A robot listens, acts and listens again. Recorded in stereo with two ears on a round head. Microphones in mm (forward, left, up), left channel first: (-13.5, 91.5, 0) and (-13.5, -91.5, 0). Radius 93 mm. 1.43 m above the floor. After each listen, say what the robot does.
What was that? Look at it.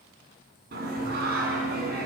Turn 45° right.
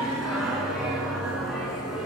Facing the singing, over 4 m away.